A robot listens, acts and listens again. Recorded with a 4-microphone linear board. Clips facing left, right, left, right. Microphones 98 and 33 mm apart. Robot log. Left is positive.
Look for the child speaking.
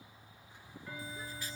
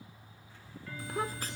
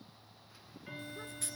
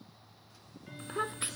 note: The child speaking: about 75° right or 105° right.
cmd yaw -75
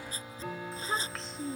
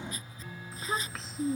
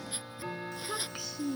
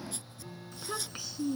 end: Facing the child speaking.